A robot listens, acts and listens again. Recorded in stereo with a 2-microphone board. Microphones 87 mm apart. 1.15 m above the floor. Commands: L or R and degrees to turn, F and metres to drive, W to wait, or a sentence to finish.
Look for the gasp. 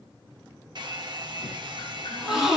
R30
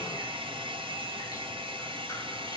W
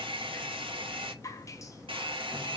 I heard a gasp, but can't make it out now. It was about 25° left or 145° right.